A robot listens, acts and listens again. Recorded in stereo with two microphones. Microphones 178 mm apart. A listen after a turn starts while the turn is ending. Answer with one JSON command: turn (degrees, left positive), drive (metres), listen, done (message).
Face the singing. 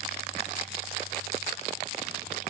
{"listen": true}
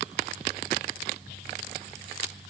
{"listen": true}
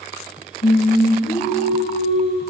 {"turn": 70}
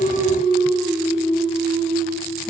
{"turn": 30}
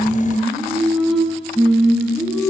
{"done": "Found it: singing, straight ahead."}